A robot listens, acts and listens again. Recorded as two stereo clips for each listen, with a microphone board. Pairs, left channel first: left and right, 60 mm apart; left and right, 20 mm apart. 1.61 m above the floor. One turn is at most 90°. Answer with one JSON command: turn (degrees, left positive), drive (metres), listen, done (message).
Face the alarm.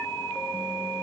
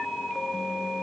{"listen": true}
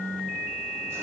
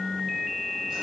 {"listen": true}
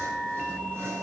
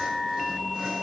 {"done": "I can't make out an alarm."}